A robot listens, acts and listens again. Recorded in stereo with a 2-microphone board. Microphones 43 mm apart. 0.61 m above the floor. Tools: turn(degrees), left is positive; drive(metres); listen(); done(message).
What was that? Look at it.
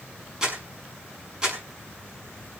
turn(degrees=-15)
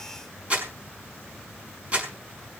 turn(degrees=-150)
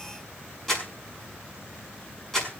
turn(degrees=10)
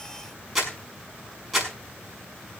done("Facing the crumpling.")